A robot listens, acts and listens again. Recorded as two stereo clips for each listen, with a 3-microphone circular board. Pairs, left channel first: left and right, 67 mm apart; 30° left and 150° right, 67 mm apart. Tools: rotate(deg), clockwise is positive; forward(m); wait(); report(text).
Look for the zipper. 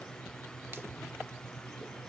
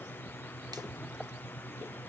wait()
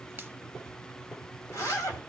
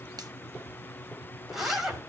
rotate(-125)
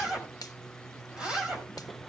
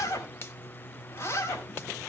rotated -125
rotate(15)
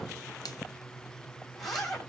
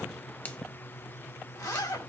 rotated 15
report("Found it: a zipper, straight ahead, 2 to 4 m away.")